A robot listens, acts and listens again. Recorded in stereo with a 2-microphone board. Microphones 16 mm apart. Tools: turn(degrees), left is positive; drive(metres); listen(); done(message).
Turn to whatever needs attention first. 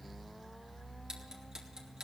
listen()
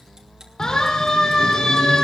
turn(degrees=50)
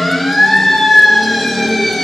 done("Found it: a siren, straight ahead.")